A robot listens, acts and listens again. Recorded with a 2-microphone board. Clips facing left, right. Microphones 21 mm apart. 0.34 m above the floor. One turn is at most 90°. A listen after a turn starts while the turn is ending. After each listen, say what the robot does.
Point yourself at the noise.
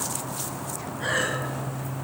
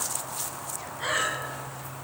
Turn 40° right.
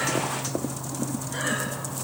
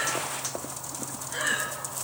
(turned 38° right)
Facing the breathing, 2 to 4 m away.